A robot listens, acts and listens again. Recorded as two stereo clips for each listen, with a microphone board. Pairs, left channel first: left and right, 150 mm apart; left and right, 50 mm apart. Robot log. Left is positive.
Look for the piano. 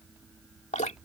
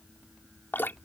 cmd idle
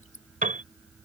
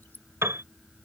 note: The piano: about 60° right or 120° right.
cmd yaw -60
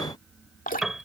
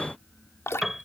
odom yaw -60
end: Found it: a piano, straight ahead.